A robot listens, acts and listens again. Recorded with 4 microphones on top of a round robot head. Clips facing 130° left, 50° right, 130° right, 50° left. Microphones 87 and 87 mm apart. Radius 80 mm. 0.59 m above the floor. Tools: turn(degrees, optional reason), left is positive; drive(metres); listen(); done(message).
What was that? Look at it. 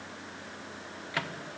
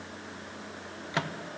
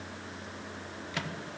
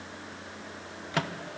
turn(degrees=15, reason="The microwave: 15° left.")
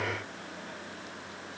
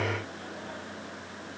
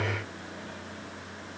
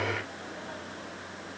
listen()
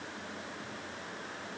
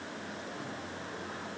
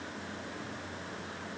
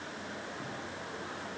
listen()
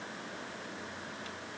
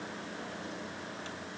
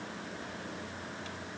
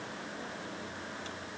done("Facing where the microwave came from. I can't hear it now.")